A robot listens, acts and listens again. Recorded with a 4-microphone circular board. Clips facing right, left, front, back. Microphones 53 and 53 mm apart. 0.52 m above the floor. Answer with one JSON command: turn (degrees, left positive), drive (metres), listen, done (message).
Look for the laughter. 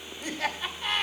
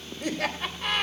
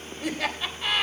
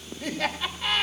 {"turn": 80}
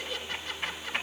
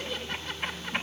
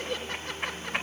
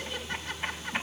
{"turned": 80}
{"done": "Facing the laughter, 2 to 4 m away."}